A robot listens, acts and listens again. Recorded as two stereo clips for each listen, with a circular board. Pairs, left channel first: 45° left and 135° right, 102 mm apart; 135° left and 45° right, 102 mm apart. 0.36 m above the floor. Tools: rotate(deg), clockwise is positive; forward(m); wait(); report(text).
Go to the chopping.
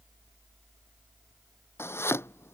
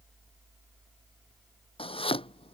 rotate(-110)
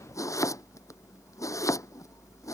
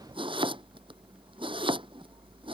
rotate(15)
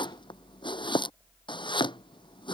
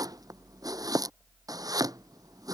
forward(1.0)
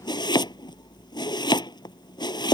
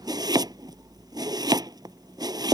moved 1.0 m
forward(1.0)
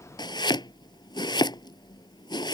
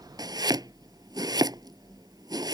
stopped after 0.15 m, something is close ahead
report("I am next to the chopping.")